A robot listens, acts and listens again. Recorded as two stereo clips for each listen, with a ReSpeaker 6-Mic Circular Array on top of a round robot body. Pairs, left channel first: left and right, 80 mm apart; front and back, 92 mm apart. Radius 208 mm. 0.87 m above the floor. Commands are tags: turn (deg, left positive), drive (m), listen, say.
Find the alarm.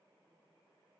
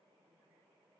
<listen/>
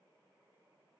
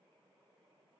<listen/>
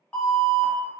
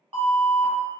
<turn deg="165"/>
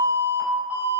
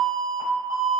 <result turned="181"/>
<turn deg="-15"/>
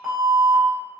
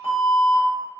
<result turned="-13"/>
<say>Facing the alarm, 1 to 2 m away.</say>